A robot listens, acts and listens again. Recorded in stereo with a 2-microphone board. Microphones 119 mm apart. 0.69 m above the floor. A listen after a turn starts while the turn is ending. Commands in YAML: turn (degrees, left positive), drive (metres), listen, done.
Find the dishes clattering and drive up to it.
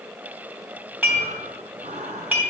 turn: -30
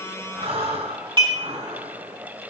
turn: -140
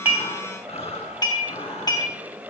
turn: 35
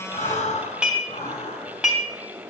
turn: -10
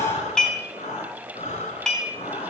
drive: 1.0
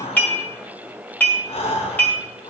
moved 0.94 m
turn: 15
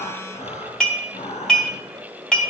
drive: 1.0
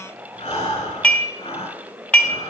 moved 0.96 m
turn: 10
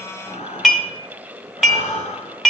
drive: 1.0
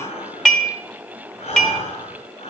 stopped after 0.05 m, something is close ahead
done: "Arrived at the dishes clattering, straight ahead."